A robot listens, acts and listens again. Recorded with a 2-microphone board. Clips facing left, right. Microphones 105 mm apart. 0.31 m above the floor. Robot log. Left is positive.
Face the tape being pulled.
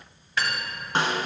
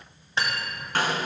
cmd idle
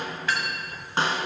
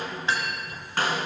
cmd idle
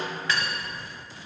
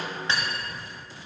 end: I can't make out tape being pulled, only cutlery clinking and a snare drum.